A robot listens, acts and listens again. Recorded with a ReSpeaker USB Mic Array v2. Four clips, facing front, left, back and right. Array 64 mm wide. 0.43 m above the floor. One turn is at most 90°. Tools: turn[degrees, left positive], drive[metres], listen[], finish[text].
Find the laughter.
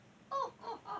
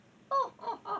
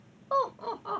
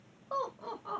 Thought: The laughter: 175° left.
Action: turn[90]
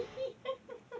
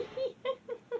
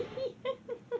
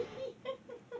Thought: The laughter is now 125° left.
Action: turn[90]
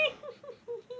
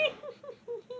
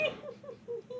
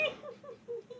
Thought: The laughter is now 65° left.
Action: turn[65]
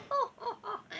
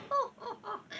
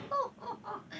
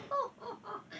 Thought: The laughter is now 30° left.
Action: turn[30]
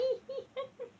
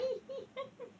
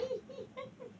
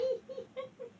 Thought: The laughter is now 10° left.
Action: turn[10]
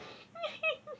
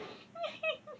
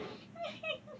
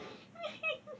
Action: finish[Found it: laughter, straight ahead.]